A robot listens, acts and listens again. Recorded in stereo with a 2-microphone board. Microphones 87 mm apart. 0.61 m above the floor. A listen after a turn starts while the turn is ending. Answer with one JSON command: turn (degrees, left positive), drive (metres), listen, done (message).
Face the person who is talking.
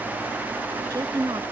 {"turn": -45}
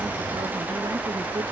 {"listen": true}
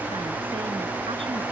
{"listen": true}
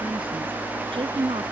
{"turn": -90}
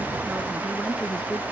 {"turn": 10}
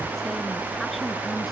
{"listen": true}
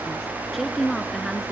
{"done": "Found it: a woman speaking, straight ahead."}